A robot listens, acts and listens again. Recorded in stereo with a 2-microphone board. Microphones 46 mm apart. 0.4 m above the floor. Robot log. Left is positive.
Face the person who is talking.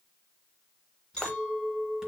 cmd idle
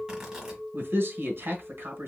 note: The man speaking: about 55° right or 125° right.
cmd yaw -55
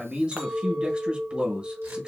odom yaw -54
note: So it is at 30° right.
cmd yaw -30
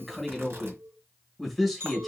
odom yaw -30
end: Facing the man speaking.